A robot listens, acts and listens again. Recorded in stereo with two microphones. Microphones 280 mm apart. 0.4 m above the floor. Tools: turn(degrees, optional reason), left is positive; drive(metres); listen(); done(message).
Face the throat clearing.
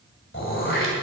turn(degrees=45, reason="The throat clearing: about 45° left or 135° left.")
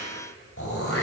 turn(degrees=80, reason="So it is at 80° left.")
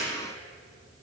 listen()
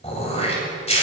turn(degrees=30, reason="The throat clearing is now 30° left.")
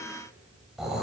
done("Found it: throat clearing, straight ahead, 2 to 4 m away.")